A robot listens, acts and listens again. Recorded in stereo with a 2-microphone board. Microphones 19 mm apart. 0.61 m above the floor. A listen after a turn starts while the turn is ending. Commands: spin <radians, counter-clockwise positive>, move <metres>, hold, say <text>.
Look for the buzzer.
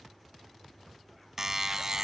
spin -0.44
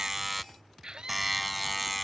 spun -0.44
say Facing the buzzer.